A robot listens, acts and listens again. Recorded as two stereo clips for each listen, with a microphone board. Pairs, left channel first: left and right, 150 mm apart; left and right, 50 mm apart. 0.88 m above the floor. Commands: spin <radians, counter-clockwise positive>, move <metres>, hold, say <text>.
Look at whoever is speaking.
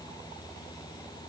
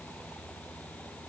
hold
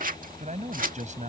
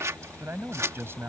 spin -0.96
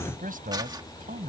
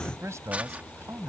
spin -1.22
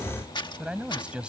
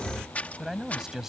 say Facing the man speaking.